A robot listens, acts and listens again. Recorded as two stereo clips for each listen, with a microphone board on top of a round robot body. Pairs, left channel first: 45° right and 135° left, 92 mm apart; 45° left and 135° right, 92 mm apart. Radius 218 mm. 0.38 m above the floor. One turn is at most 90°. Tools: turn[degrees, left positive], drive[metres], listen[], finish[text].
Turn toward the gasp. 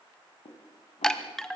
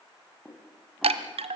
Action: listen[]
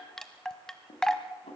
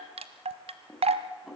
Action: listen[]
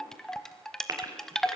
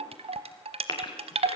Thought: The gasp: 80° left.
Action: turn[80]
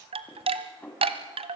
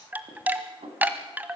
Action: finish[Facing where the gasp came from. I can't hear it now.]